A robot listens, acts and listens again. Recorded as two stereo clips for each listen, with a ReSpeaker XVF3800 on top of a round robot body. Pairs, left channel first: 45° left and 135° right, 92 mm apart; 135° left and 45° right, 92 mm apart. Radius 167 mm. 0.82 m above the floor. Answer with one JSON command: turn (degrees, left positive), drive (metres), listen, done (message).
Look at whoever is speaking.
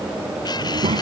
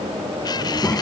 {"turn": -155}
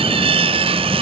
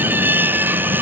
{"listen": true}
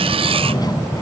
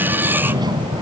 {"done": "Found it: a child speaking, straight ahead."}